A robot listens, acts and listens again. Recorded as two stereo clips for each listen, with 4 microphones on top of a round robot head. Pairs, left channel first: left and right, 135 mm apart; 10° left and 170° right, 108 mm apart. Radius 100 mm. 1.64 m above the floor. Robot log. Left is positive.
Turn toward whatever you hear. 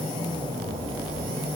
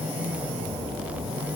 cmd idle
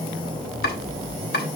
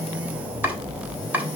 note: The chopping: 115° left.
cmd yaw +115
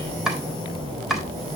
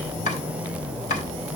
end: Found it: chopping, straight ahead.